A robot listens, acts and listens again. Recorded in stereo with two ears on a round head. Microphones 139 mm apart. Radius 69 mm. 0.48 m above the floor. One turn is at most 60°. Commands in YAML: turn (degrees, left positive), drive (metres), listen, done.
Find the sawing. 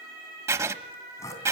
turn: 20
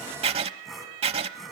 done: "Facing the sawing, 2 to 4 m away."